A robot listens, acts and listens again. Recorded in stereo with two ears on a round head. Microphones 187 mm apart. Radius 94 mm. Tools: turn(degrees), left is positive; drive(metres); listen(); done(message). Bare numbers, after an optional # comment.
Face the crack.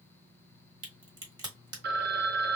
# The crack: about 20° right or 160° right.
turn(-20)
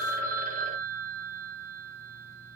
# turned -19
listen()
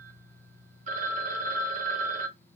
done("I heard a crack, but can't make it out now. It was about straight ahead or 140° right.")